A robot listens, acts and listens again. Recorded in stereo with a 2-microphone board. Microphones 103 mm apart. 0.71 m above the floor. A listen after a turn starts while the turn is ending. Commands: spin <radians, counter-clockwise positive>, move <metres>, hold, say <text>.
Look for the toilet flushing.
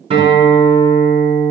hold
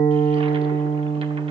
hold
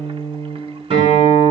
say I can't make out a toilet flushing, only a guitar.